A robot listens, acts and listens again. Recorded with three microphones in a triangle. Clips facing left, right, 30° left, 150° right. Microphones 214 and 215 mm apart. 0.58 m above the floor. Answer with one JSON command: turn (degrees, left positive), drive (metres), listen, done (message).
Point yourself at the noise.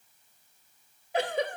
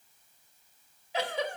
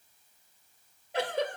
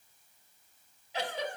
{"turn": 60}
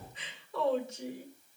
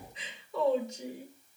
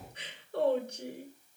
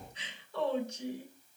{"done": "Facing the giggle."}